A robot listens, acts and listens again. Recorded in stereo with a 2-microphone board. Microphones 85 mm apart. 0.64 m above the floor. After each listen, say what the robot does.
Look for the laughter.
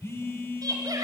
Turn 45° right.
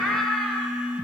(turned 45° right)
Found it: laughter, straight ahead, 2 to 4 m away.